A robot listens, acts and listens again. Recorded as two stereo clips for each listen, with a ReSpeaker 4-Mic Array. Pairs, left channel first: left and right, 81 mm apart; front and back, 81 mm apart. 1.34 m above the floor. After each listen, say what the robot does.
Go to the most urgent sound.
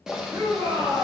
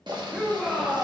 Turn 95° right.
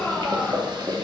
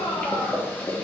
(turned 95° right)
Drive 1.0 m forward.
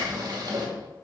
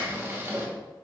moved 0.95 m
Keep listening.
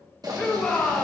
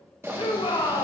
Turn 15° left.
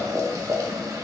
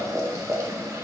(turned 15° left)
Keep listening.
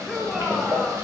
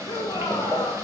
Drive 1.0 m forward.
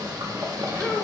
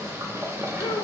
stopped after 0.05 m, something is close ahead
Turn 10° left.
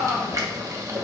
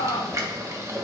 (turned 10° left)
I am next to the shout.